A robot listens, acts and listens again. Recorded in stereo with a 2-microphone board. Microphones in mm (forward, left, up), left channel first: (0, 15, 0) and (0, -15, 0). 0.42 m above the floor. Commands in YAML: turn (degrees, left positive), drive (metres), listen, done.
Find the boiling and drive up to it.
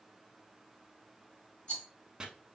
listen: true
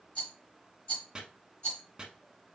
listen: true
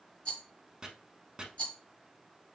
done: "I can't make out boiling, only chopping and a rattle."